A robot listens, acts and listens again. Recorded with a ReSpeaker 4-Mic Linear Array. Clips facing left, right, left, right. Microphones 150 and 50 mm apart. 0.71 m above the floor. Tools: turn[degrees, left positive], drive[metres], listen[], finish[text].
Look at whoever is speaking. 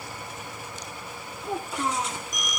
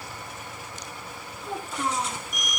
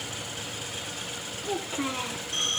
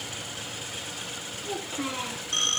Action: turn[30]
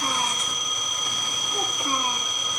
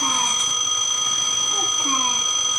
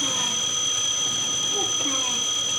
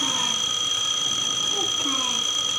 Action: listen[]
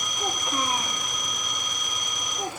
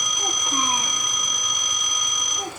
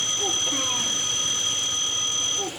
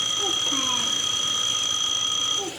Action: listen[]
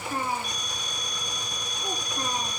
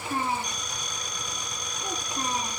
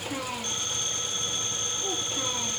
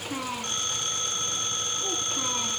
Thought: So it is at 25° right.
Action: turn[-25]
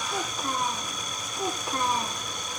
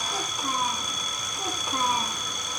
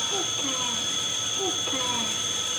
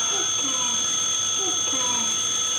Action: listen[]
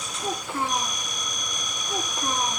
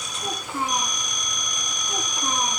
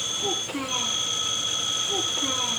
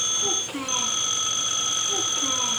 Action: finish[Found it: a child speaking, straight ahead.]